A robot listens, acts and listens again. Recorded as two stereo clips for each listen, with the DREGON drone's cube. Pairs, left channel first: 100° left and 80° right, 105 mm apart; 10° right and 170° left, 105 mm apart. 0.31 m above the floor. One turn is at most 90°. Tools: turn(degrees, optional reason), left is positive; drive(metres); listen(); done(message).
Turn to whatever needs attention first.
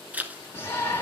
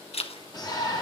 turn(degrees=40, reason="The shout: 40° left.")
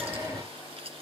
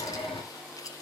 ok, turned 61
turn(degrees=-20, reason="The shout is now 20° right.")
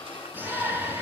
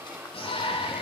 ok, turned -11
turn(degrees=-10, reason="The shout is now 10° right.")
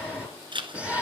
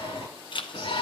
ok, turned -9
done("Facing the shout.")